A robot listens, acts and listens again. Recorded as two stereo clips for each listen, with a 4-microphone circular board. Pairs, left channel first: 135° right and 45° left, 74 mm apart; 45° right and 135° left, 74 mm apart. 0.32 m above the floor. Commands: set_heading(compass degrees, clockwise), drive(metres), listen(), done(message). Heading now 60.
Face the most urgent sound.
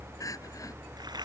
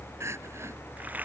set_heading(235)
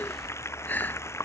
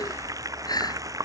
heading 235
set_heading(305)
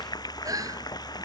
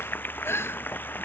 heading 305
set_heading(295)
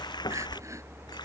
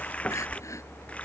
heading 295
listen()
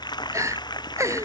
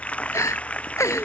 done("Found it: crying, straight ahead.")